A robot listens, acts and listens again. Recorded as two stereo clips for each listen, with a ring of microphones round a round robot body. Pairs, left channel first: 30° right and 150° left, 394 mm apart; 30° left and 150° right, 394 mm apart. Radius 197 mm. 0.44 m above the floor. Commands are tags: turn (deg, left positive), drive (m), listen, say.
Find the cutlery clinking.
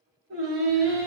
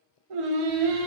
<listen/>
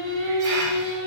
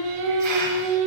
<listen/>
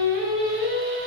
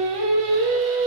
<say>I can't make out cutlery clinking, only singing.</say>